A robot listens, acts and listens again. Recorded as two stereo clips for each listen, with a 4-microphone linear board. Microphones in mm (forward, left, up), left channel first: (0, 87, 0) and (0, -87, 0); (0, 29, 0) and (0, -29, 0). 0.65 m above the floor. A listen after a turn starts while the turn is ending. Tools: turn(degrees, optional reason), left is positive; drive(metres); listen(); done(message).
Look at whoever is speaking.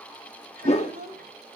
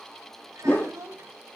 turn(degrees=-65, reason="The child speaking: about 65° right or 115° right.")
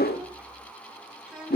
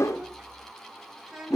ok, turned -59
done("Facing the child speaking, 2 to 4 m away.")